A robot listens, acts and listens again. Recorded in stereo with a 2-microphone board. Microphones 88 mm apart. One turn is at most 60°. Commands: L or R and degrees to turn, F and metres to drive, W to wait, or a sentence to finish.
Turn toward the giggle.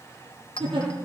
R60
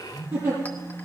R25
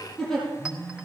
Facing the giggle.